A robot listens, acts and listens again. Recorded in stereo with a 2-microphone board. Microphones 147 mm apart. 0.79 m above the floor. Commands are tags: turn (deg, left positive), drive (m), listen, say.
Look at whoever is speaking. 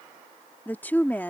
<turn deg="30"/>
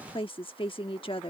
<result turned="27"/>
<turn deg="140"/>
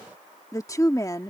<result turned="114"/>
<turn deg="25"/>
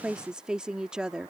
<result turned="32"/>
<say>Facing the woman speaking.</say>